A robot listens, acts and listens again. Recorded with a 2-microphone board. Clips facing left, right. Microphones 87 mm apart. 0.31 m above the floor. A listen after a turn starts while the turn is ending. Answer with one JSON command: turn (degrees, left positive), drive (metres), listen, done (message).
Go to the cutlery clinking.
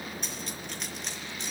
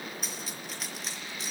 {"turn": -30}
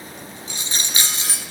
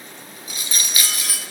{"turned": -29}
{"turn": 25}
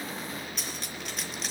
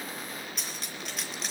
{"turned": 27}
{"drive": 1.0}
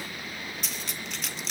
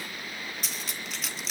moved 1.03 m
{"drive": 1.0}
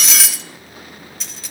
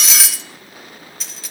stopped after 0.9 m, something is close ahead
{"done": "Arrived at the cutlery clinking, straight ahead."}